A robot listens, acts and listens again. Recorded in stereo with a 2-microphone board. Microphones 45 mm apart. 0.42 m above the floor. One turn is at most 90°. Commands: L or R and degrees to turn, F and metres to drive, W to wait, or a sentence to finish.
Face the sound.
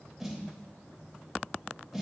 R30
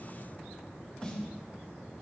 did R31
L30
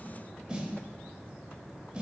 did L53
R20
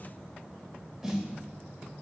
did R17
Found it: a snare drum, straight ahead, under 1 m away.